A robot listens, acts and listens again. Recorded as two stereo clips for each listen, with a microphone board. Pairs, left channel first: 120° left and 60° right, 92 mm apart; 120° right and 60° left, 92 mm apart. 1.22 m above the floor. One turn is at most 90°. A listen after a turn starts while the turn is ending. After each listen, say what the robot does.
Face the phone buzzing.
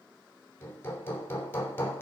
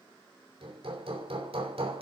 Keep listening.
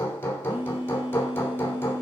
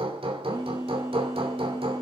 Turn 10° left.
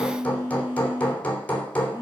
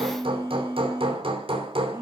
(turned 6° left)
Facing the phone buzzing, 2 to 4 m away.